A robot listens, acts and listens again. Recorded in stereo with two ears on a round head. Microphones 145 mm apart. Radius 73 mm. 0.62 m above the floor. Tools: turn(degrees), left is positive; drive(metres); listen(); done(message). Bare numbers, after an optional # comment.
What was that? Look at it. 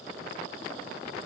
listen()
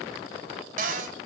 # The cupboard door: about 50° right or 130° right.
turn(-50)
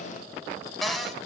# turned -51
done("Found it: a cupboard door, straight ahead, 1 to 2 m away.")